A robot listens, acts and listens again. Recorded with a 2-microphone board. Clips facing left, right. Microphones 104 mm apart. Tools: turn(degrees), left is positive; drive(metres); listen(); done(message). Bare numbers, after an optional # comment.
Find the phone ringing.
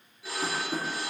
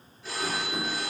turn(30)
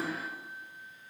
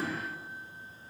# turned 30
listen()
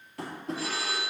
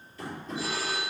# So it is at 15° right.
turn(-15)
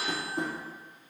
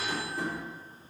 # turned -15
done("Found it: a phone ringing, straight ahead.")